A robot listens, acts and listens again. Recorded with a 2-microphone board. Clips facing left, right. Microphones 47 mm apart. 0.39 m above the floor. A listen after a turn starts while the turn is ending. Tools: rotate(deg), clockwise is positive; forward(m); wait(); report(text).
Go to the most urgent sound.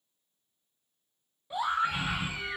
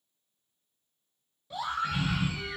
rotate(-20)
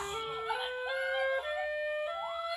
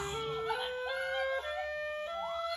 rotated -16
wait()
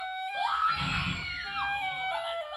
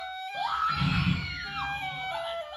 forward(1.0)
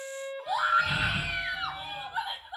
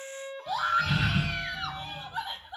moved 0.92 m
rotate(-15)
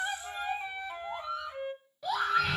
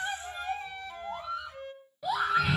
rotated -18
forward(1.0)
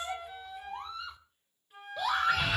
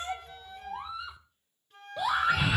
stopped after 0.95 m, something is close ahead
report("I am next to the scream.")